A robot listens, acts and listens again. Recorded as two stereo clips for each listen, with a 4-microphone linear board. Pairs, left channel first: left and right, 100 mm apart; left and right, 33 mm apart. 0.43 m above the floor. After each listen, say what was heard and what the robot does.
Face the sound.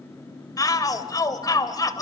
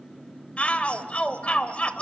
The shout: about 35° left or 145° left. Turn 35° left.
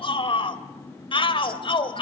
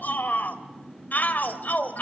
So it is at 105° left. Turn 105° left.
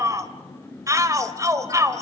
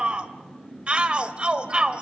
The shout is now 40° right. Turn 40° right.
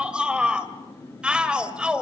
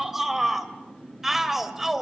The shout is now 10° right. Turn 10° right.
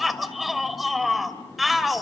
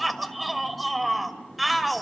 Facing the shout, 1 to 2 m away.